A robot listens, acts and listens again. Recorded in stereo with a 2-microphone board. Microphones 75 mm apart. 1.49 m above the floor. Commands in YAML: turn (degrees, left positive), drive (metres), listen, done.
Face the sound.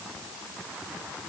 listen: true
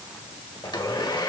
turn: 90
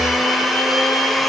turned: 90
done: "Facing the blender, 1 to 2 m away."